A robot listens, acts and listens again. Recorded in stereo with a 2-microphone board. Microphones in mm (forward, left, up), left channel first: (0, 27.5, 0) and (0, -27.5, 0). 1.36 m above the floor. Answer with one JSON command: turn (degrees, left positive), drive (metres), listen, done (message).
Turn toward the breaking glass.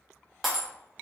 {"turn": 30}
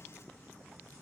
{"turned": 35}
{"listen": true}
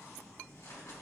{"done": "I heard breaking glass, but can't make it out now. It was about 35° right or 145° left."}